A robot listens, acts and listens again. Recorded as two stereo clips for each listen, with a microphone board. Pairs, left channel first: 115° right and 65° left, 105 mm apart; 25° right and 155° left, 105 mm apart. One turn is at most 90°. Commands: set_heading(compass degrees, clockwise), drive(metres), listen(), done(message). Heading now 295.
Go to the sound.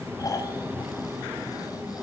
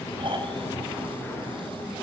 set_heading(25)
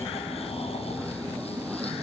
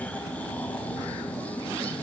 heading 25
set_heading(100)
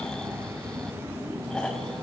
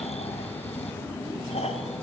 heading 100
set_heading(130)
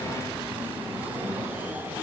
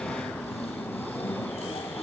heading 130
listen()
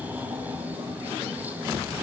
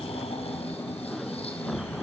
listen()
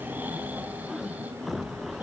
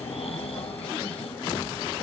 done("I heard snoring from this way, but can't make it out now. I did not reach it.")